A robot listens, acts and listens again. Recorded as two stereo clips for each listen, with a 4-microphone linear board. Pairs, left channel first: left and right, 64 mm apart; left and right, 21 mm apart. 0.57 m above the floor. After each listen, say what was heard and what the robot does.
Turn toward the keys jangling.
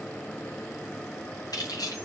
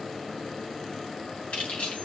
The keys jangling: about 70° left or 110° left. Turn 70° left.
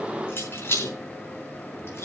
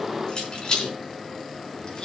So it is at 40° left. Turn 40° left.
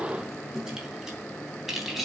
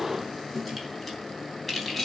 Facing the keys jangling, 2 to 4 m away.